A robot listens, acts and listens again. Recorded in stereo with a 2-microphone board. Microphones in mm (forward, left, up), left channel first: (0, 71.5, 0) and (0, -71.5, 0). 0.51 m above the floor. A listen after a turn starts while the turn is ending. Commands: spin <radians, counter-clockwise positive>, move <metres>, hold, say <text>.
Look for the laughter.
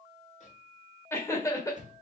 spin 0.44
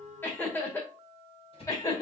spin 0.44
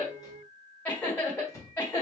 spin 0.26
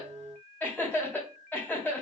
spin 0.52
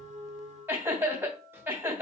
spin -0.35
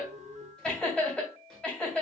say Facing the laughter, 2 to 4 m away.